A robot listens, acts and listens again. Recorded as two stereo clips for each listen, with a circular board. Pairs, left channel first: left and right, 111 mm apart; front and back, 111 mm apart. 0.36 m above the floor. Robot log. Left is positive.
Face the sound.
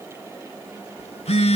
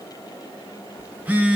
note: The phone buzzing: 105° left.
cmd yaw +105
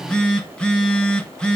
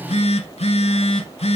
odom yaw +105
note: The phone buzzing is now 10° left.
cmd yaw +10
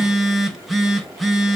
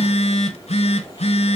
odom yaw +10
end: Facing the phone buzzing, 1 to 2 m away.